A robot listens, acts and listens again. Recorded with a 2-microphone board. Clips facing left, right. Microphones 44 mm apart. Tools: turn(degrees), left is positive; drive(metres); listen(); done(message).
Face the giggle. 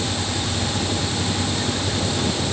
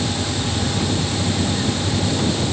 listen()
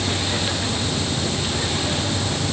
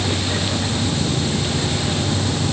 listen()
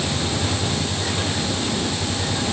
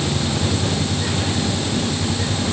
done("I can't make out a giggle to turn to.")